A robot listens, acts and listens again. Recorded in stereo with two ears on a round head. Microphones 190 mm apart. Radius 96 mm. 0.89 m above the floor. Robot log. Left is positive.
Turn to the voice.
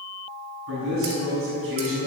note: The man speaking: about 70° right or 110° right.
cmd yaw -70
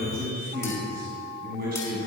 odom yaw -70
note: So it is at 40° right.
cmd yaw -40
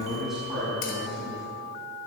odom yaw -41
end: Facing the man speaking.